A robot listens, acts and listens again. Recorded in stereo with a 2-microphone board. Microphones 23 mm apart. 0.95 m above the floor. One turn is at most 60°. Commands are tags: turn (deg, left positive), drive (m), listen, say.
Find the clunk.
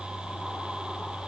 <listen/>
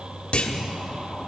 <turn deg="50"/>
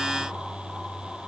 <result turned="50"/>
<listen/>
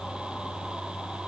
<say>I heard a clunk, but can't make it out now. It was about straight ahead or 80° left.</say>